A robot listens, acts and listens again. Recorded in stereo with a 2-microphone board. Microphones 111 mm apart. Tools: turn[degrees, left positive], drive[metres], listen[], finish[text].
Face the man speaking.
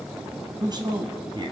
Thought: The man speaking: about 45° right or 135° right.
Action: turn[-45]
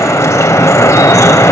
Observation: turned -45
Action: listen[]
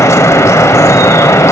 Action: listen[]
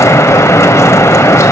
Action: finish[I heard a man speaking, but can't make it out now. It was about straight ahead or 90° right.]